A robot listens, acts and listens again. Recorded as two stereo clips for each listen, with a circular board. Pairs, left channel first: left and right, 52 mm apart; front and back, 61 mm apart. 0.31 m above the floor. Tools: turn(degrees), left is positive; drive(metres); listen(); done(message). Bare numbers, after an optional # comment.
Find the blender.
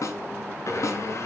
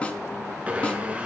# The blender: 110° left.
turn(110)
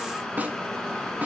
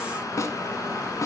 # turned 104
listen()
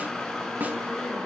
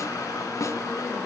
listen()
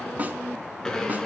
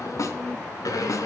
# The blender is now 10° left.
turn(10)
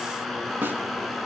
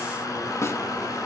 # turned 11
done("Found it: a blender, straight ahead.")